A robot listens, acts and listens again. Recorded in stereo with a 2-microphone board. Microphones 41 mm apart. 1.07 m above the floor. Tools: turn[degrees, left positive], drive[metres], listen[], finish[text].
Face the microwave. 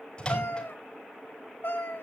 Thought: The microwave: about 25° left or 155° left.
Action: turn[25]
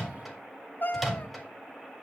Action: finish[Facing the microwave, 2 to 4 m away.]